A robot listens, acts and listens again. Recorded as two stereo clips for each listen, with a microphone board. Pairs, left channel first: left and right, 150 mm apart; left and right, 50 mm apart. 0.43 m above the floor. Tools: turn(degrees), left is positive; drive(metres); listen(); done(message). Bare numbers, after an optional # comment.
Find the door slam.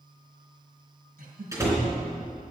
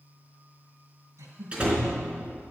# The door slam: about 20° right or 160° right.
turn(-20)
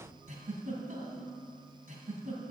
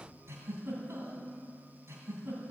listen()
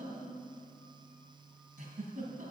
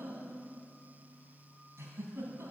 done("I heard a door slam, but can't make it out now. It was about straight ahead or 140° right.")